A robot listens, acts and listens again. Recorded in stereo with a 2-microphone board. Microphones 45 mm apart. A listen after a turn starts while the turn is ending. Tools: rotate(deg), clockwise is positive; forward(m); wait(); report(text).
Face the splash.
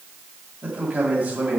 wait()
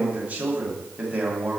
wait()
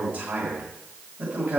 report("I can't make out a splash to turn to.")